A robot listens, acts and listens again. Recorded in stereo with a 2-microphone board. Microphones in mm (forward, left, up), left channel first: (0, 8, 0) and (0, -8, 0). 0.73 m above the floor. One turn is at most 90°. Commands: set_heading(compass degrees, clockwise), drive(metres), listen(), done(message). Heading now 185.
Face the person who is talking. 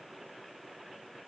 listen()
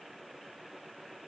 listen()
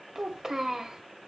set_heading(220)
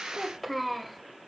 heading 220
done("Found it: a child speaking, straight ahead, 2 to 4 m away.")